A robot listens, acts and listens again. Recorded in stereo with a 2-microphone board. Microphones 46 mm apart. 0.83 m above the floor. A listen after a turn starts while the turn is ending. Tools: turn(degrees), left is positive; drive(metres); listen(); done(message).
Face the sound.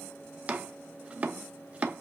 turn(degrees=-25)
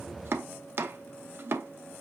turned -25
turn(degrees=-125)
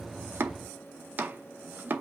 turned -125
turn(degrees=-40)
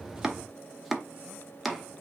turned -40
done("Facing the chopping, under 1 m away.")